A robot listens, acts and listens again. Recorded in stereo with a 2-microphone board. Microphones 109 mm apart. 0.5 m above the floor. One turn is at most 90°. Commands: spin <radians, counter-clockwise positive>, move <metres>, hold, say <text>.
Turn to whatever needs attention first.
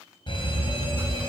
spin 0.87
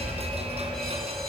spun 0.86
say Facing the fire alarm.